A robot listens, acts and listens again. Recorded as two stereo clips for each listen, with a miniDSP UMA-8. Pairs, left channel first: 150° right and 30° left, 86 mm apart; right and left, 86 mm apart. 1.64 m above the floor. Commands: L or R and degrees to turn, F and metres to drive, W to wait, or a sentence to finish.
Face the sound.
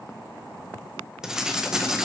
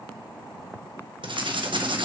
L110
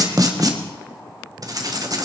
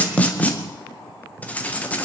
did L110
R15
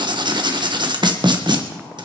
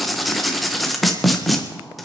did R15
Found it: writing, straight ahead, 1 to 2 m away.